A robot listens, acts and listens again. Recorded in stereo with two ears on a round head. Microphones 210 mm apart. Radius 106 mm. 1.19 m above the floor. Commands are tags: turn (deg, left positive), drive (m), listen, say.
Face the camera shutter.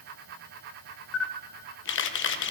<turn deg="50"/>
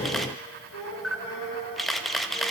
<say>Facing the camera shutter, 1 to 2 m away.</say>